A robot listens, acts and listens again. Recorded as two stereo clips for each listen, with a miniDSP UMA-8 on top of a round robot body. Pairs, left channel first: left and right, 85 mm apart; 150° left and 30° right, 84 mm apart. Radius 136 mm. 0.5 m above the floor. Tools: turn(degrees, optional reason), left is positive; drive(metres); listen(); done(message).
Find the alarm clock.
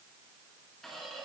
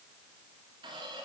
listen()
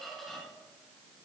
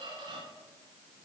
listen()
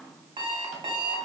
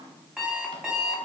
turn(degrees=-115, reason="The alarm clock: 115° right.")
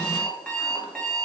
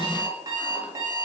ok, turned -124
turn(degrees=10, reason="The alarm clock is now 10° left.")
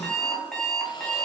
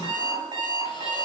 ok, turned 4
done("Found it: an alarm clock, straight ahead.")